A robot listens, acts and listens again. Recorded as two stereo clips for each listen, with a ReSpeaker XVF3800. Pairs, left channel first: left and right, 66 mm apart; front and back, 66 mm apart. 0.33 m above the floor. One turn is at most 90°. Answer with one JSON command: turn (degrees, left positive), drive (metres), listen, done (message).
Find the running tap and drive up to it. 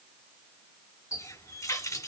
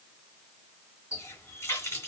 {"turn": 50}
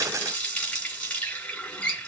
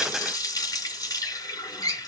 {"turn": 20}
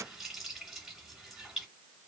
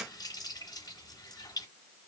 {"drive": 1.0}
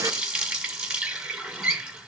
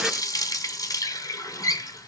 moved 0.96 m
{"turn": -15}
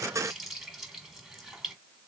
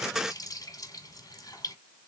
{"drive": 1.0}
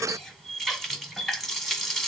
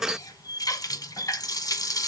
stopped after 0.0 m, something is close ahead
{"done": "Arrived at the running tap, straight ahead."}